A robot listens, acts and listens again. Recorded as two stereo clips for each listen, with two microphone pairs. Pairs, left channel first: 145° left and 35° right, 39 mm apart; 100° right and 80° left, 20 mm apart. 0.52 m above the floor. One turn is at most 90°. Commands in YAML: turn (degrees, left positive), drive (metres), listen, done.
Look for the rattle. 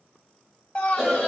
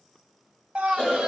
listen: true
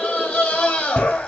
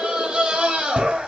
listen: true
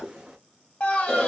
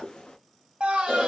done: "I can't make out a rattle, only a scream and a cough."